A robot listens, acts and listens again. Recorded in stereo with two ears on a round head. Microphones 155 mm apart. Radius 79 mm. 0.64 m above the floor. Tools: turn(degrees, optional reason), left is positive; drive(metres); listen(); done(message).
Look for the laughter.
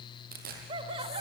turn(degrees=-30, reason="The laughter: about 30° right or 150° right.")
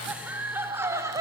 turn(degrees=-20, reason="The laughter: about 20° right or 160° right.")
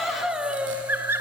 turn(degrees=-15, reason="So it is at 15° right.")
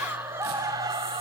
turn(degrees=-25, reason="The laughter is now 25° right.")
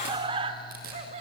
turn(degrees=-40, reason="The laughter is now 40° right.")
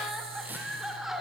done("Facing the laughter, 1 to 2 m away.")